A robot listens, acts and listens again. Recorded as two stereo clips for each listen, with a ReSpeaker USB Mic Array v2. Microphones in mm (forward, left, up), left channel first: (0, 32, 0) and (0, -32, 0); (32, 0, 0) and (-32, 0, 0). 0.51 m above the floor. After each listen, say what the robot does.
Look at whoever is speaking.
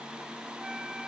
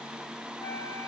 Keep listening.
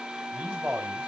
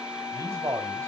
Turn 145° right.
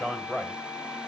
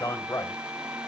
Found it: a man speaking, straight ahead.